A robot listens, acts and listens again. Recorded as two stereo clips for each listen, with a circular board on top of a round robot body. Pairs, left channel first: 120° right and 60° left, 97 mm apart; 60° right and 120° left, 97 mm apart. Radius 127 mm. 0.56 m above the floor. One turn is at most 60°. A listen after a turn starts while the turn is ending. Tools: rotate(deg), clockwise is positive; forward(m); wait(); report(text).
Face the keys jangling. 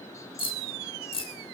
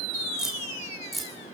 rotate(60)
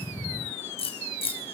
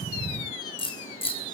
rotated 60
rotate(60)
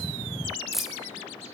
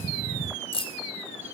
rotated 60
rotate(25)
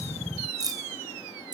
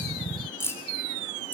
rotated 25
rotate(-10)
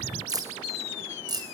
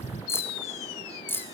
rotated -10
rotate(-10)
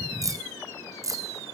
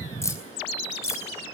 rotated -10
report("Found it: keys jangling, straight ahead.")